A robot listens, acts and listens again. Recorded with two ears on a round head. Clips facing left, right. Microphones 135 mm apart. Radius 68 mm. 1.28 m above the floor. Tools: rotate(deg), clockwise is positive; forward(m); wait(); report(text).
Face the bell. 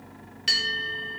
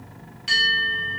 rotate(-65)
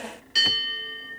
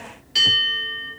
report("Found it: a bell, straight ahead.")